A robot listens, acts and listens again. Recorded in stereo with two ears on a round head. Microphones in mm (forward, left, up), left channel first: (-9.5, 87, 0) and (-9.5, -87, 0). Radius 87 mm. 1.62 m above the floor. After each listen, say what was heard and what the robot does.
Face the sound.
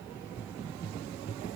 Keep listening.
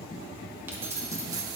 The keys jangling: about 20° right or 160° right. Turn 20° right.
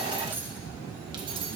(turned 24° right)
The keys jangling: about 30° right or 150° right. Turn 30° right.
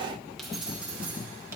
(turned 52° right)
So it is at 10° right. Turn 10° right.
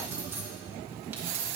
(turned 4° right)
The keys jangling is now 10° right. Turn 10° right.
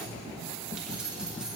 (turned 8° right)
Facing the keys jangling.